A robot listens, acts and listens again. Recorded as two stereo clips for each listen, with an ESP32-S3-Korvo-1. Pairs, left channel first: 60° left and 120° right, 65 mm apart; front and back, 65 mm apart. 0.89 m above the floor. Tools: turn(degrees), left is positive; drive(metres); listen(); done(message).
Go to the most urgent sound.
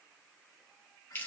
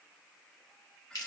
listen()
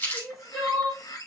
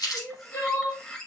turn(degrees=-35)
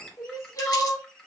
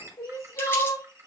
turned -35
turn(degrees=25)
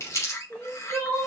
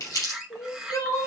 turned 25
turn(degrees=-10)
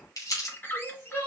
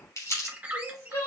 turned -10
drive(metres=1.0)
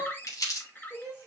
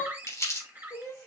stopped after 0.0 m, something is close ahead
done("Blocked. The crying is further on, straight ahead.")